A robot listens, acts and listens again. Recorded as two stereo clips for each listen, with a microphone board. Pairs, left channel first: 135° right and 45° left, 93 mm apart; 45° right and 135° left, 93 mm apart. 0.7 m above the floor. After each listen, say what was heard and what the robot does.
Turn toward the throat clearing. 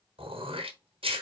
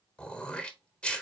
The throat clearing: 35° left. Turn 35° left.
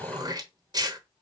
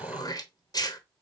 Facing the throat clearing, under 1 m away.